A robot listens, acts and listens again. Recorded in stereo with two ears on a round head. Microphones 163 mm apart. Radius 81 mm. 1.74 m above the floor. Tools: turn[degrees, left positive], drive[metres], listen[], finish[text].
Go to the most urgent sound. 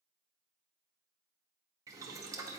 Action: listen[]
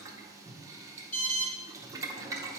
Thought: The alarm: about 45° left or 135° left.
Action: turn[45]
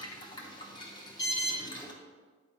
Thought: So it is at 85° left.
Action: turn[85]
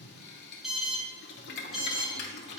Action: drive[1.0]
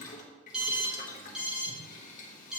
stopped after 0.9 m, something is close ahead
Action: finish[Arrived at the alarm, straight ahead.]